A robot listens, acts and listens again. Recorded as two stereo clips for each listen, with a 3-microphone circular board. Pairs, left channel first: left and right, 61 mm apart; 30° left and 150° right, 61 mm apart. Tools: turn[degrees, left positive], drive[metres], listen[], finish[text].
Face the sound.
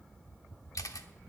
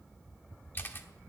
Thought: The camera shutter: 80° left.
Action: turn[80]
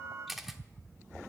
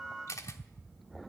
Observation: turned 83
Action: finish[Facing the camera shutter, 1 to 2 m away.]